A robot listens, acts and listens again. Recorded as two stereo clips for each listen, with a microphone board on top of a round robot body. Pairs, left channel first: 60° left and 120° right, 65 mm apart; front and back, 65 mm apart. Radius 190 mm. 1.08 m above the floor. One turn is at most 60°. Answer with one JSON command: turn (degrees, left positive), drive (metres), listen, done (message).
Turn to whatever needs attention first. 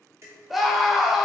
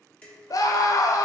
{"turn": -30}
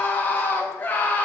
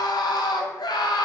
{"done": "Found it: a scream, straight ahead, under 1 m away."}